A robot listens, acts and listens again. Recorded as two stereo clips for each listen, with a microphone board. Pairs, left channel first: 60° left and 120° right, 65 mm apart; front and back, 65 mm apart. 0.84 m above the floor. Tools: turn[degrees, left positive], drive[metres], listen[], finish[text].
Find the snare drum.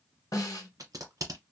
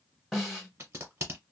Thought: The snare drum: 90° left.
Action: turn[90]
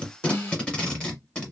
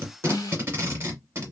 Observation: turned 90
Action: finish[Facing the snare drum, 1 to 2 m away.]